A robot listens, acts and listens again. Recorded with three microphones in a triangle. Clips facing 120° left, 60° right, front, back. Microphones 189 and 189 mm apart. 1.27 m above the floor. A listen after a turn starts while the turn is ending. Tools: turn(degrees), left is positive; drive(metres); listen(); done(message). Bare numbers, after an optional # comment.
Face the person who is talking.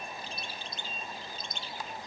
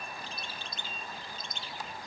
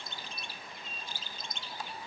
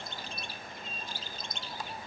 listen()
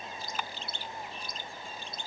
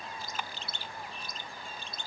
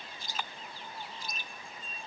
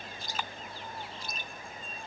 listen()
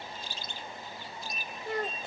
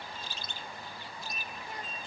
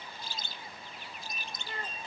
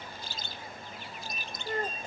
# The child speaking: 135° left.
turn(135)
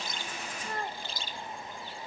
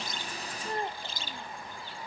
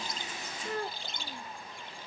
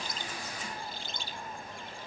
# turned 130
done("Facing the child speaking.")